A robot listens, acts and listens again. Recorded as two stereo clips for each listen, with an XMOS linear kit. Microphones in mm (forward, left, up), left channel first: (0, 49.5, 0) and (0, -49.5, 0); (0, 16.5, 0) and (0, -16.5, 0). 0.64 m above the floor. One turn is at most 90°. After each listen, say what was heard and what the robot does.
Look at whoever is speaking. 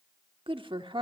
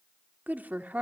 The woman speaking: about 55° right or 125° right. Turn 55° right.
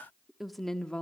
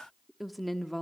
So it is at 10° left. Turn 10° left.
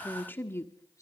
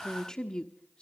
The woman speaking is now 25° left. Turn 25° left.
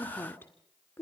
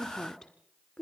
The woman speaking is now 30° left. Turn 30° left.
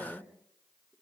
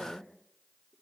Facing the woman speaking, 2 to 4 m away.